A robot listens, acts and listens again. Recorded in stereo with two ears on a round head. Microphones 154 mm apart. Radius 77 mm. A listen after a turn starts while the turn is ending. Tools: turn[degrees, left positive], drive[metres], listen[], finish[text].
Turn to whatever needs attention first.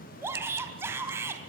Action: turn[-30]
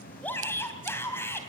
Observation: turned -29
Thought: So it is at 15° left.
Action: turn[15]
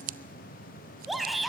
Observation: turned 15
Action: finish[Found it: a shout, straight ahead.]